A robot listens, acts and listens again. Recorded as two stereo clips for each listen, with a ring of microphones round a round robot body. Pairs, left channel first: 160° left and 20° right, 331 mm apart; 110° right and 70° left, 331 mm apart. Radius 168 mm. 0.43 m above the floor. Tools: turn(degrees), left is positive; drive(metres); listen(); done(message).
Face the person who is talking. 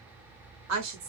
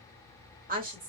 done("Facing the woman speaking.")